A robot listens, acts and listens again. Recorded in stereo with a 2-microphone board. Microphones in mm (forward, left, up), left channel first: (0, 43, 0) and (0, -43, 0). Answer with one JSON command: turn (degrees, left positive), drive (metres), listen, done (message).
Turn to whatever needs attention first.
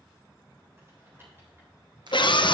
{"turn": 65}
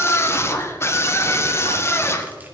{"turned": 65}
{"turn": 35}
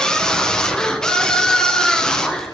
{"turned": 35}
{"turn": 10}
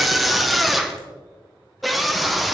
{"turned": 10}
{"done": "Found it: a scream, straight ahead."}